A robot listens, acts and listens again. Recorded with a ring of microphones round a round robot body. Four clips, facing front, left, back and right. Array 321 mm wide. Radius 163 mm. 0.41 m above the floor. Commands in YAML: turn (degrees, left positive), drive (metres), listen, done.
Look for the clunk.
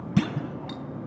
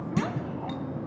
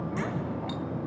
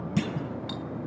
done: "Facing the clunk."